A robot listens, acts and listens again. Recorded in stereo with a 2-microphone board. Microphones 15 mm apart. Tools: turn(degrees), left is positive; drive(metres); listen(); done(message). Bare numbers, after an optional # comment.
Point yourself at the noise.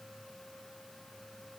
listen()
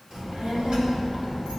# The child speaking: about 75° right or 105° right.
turn(-75)
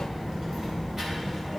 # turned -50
# So it is at 30° right.
turn(-30)
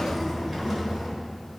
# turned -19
# The child speaking is now 15° right.
turn(-15)
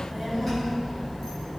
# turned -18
done("Found it: a child speaking, straight ahead, 2 to 4 m away.")